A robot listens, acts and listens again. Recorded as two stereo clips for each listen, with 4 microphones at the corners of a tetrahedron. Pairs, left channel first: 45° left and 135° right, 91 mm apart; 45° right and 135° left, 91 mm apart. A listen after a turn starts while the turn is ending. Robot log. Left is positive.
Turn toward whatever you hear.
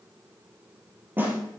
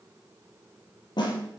note: The snare drum: 70° right.
cmd yaw -70
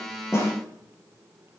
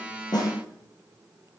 cmd idle
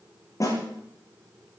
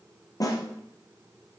end: Facing the snare drum, 2 to 4 m away.